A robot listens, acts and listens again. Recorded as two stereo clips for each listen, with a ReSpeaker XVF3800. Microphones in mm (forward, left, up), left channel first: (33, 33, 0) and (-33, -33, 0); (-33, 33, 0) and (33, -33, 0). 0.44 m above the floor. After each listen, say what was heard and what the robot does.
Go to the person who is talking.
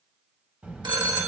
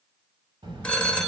The child speaking: 60° right. Turn 60° right.
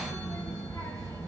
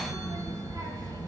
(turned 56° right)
Drive 1.0 m forward.
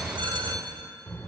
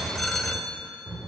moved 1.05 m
The child speaking is now 15° right. Turn 15° right.
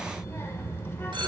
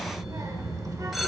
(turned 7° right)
The child speaking is now 10° right. Turn 10° right.
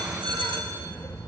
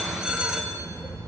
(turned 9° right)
Drive 1.0 m forward.
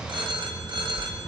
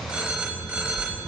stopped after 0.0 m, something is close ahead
I am next to the child speaking.